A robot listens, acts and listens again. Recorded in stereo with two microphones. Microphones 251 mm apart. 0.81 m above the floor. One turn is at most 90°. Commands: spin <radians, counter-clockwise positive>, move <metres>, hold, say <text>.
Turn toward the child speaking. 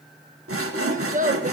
spin -0.61
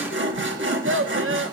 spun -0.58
spin -1.57
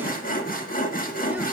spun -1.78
hold
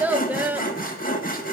spin -0.17
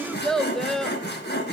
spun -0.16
say Found it: a child speaking, straight ahead.